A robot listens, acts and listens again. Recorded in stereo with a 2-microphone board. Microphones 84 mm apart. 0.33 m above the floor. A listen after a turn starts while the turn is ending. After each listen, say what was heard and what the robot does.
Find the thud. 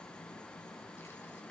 Keep listening.
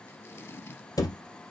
The thud: about 45° left or 135° left. Turn 45° left.
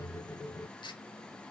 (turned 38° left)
Keep listening.
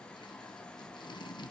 I heard a thud, but can't make it out now. It was about 10° left or 95° left.